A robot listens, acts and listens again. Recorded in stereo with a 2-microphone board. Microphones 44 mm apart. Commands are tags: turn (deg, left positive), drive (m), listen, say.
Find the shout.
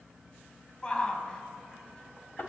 <turn deg="20"/>
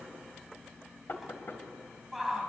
<say>Found it: a shout, straight ahead.</say>